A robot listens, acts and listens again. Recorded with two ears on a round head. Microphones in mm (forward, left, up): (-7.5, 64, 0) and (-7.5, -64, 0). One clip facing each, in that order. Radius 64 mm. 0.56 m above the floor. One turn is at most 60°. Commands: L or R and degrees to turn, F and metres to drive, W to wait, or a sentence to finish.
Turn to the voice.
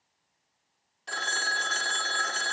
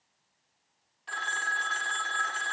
W
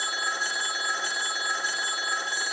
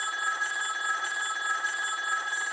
W
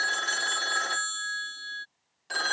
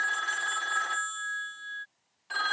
I can't make out anyone speaking to turn to.